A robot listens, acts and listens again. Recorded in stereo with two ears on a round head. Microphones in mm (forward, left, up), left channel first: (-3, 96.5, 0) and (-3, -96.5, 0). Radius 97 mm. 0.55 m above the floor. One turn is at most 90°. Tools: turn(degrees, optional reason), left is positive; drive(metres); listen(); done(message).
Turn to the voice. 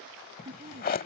turn(degrees=-25, reason="The woman speaking: about 25° right or 155° right.")
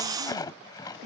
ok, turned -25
listen()
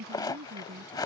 turn(degrees=-45, reason="The woman speaking: about 45° right or 135° right.")
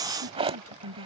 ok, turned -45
turn(degrees=-90, reason="So it is at 105° right.")
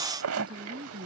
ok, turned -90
turn(degrees=-25, reason="The woman speaking is now 25° right.")
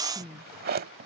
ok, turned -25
done("Found it: a woman speaking, straight ahead.")